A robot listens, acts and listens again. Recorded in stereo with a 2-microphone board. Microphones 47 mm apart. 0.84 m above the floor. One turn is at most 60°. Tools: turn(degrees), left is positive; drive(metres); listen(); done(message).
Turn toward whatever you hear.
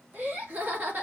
turn(degrees=-40)
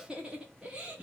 turn(degrees=-20)
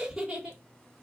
turn(degrees=-15)
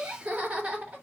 turn(degrees=-30)
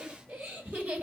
turn(degrees=-30)
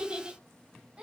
turn(degrees=-20)
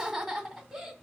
done("Facing the laughter.")